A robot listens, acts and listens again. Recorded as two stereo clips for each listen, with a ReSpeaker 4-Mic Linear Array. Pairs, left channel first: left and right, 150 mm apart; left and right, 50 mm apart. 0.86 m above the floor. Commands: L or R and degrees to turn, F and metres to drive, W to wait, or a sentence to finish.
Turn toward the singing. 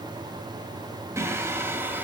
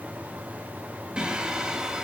R30
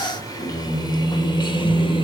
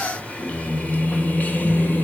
L35
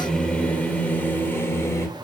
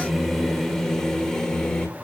L20
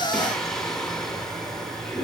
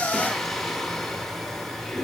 Found it: singing, straight ahead.